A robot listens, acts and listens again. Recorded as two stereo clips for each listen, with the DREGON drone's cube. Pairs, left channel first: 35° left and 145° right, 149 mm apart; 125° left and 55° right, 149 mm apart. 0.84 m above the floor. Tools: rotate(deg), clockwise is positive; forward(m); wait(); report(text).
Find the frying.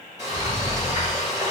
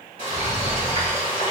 rotate(80)
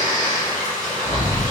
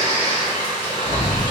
report("Facing the frying, 1 to 2 m away.")